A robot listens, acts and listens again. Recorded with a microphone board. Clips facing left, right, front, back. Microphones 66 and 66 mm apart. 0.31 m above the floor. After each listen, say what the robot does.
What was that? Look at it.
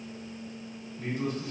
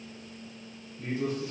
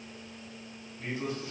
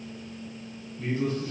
Turn 65° left.
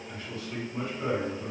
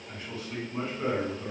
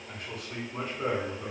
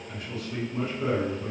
Turn 35° right.
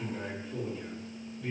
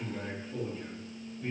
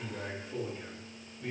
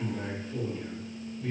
Turn 10° right.
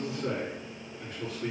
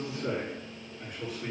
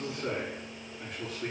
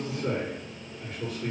Facing the man speaking, 2 to 4 m away.